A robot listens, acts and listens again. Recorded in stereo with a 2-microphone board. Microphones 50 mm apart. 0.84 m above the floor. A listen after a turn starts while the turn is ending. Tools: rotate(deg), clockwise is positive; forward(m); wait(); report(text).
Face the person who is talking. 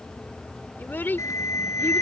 rotate(-40)
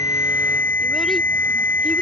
wait()
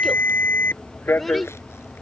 report("Facing the child speaking.")